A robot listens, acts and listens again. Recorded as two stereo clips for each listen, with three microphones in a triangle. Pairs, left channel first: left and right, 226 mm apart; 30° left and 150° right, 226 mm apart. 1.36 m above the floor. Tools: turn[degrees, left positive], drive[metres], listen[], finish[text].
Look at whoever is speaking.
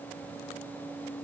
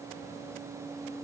Action: listen[]
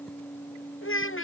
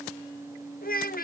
Thought: The child speaking: 75° left.
Action: turn[75]
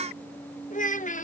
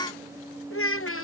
Thought: The child speaking is now 40° left.
Action: turn[40]
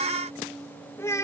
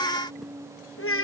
Thought: The child speaking is now 15° left.
Action: turn[15]
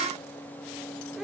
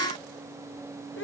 Action: finish[Found it: a child speaking, straight ahead.]